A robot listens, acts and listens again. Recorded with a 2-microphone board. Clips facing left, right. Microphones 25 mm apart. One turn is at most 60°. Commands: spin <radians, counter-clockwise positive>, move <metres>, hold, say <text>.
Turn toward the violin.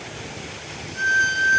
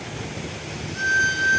spin 0.52
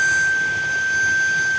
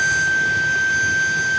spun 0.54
spin -0.52
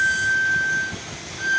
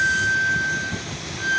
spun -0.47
say Facing the violin, 1 to 2 m away.